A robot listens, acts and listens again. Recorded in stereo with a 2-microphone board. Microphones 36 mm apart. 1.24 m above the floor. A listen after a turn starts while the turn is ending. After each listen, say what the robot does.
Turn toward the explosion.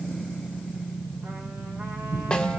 Turn 45° right.
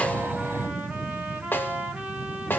Keep listening.
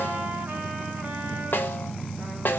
I heard an explosion, but can't make it out now. It was about straight ahead or 90° right.